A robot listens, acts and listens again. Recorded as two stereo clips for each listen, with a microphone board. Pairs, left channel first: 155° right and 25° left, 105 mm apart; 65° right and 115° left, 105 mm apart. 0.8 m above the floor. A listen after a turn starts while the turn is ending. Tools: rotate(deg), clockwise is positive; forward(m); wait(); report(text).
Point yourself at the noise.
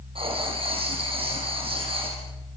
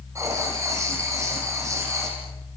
rotate(-50)
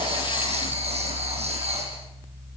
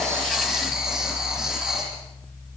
rotate(-30)
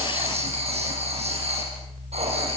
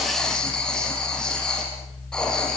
rotate(-15)
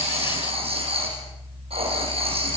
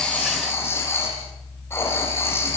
report("Found it: writing, straight ahead.")